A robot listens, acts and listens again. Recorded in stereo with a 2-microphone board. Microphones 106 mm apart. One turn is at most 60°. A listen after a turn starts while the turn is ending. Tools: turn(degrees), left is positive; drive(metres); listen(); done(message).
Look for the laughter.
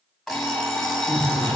turn(degrees=35)
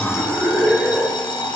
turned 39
done("Found it: laughter, straight ahead, 2 to 4 m away.")